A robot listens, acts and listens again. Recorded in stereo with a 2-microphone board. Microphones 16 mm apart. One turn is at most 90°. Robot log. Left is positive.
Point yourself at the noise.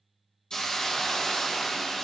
note: The hiss: about 65° left or 115° left.
cmd yaw +65
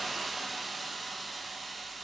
end: Found it: a hiss, straight ahead, 1 to 2 m away.